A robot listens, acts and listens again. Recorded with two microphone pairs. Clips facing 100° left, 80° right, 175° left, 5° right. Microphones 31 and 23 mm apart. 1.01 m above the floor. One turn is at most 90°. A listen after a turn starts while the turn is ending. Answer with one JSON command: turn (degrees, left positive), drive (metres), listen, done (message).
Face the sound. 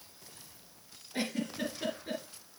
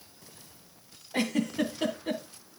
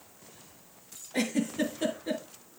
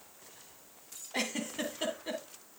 {"turn": -65}
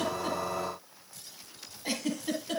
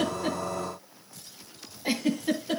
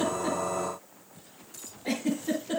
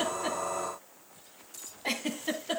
{"done": "Found it: a giggle, straight ahead."}